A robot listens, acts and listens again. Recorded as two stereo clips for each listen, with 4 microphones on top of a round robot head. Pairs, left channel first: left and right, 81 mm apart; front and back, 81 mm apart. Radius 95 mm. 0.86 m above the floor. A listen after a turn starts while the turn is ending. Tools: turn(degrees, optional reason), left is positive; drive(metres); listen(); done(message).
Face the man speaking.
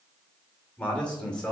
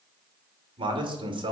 turn(degrees=170, reason="The man speaking: 170° left.")
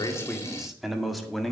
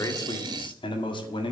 done("Facing the man speaking.")